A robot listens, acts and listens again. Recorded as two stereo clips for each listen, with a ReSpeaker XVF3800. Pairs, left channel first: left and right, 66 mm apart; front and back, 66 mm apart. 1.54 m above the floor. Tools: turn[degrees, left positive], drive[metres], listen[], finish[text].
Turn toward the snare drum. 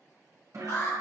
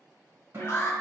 Thought: The snare drum: 125° right.
Action: turn[-125]
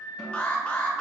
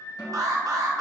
Action: listen[]
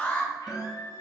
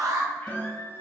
Action: finish[Found it: a snare drum, straight ahead, 1 to 2 m away.]